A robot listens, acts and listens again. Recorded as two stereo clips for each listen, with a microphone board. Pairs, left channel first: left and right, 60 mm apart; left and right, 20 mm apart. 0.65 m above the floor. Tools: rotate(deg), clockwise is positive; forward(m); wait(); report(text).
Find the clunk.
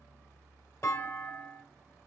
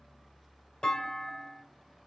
rotate(-50)
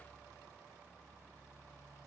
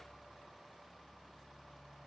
wait()
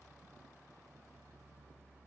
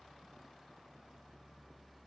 report("I heard a clunk, but can't make it out now. It was about straight ahead or 80° left.")